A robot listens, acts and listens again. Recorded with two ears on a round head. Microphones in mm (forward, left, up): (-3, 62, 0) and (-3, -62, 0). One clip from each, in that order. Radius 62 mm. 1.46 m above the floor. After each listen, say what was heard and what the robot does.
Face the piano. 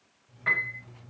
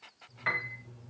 The piano: about 70° right or 110° right. Turn 70° right.
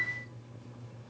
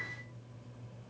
Facing the piano.